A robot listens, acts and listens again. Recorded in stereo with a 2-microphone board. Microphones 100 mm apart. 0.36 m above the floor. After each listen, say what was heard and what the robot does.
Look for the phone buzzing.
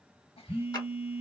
The phone buzzing: about 20° right or 160° right. Turn 20° right.
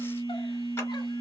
So it is at 140° right. Turn 140° right.
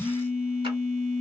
Found it: a phone buzzing, straight ahead, 1 to 2 m away.